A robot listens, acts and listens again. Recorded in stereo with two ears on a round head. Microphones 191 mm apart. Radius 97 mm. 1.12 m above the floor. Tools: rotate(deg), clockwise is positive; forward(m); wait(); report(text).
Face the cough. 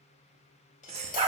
rotate(30)
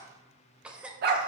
report("Facing the cough, under 1 m away.")